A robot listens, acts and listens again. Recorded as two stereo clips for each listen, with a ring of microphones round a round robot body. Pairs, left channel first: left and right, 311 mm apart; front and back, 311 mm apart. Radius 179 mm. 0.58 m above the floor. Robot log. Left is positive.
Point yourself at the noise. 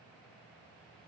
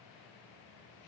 cmd idle
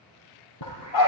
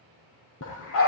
note: The dog barking: 55° left.
cmd yaw +55
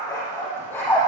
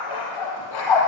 end: Found it: a dog barking, straight ahead, over 4 m away.